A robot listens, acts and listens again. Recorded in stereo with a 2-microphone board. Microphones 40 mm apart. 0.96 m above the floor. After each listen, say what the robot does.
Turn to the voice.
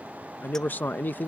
Turn 55° left.
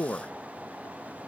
Turn 50° left.
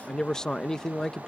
Turn 20° left.
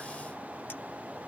Keep listening.
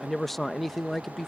Facing the man speaking.